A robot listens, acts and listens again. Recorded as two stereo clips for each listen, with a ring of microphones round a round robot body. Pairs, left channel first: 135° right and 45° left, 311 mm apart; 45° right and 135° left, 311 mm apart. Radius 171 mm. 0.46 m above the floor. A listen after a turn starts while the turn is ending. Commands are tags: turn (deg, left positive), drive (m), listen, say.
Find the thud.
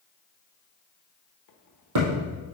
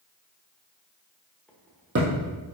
<turn deg="80"/>
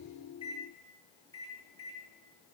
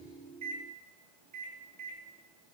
<say>I heard a thud from this way, but can't make it out now.</say>